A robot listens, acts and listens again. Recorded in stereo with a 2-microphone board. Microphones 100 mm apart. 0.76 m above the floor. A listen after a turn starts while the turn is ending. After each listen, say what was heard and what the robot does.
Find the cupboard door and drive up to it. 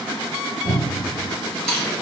The cupboard door: about 60° right or 120° right. Turn 60° right.
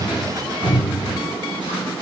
Drive 1.0 m forward.
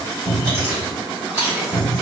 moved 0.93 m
Drive 1.0 m forward.
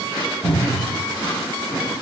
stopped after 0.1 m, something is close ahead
Arrived at the cupboard door, straight ahead.